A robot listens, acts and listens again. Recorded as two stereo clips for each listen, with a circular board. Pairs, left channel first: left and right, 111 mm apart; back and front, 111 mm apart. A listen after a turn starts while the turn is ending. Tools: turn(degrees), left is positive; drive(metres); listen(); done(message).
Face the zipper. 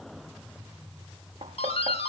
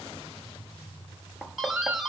listen()
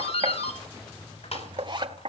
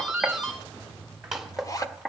turn(degrees=-125)
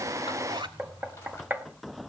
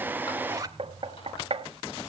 turn(degrees=-55)
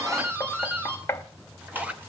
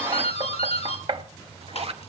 turn(degrees=-15)
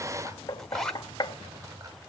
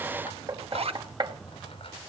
done("Found it: a zipper, straight ahead.")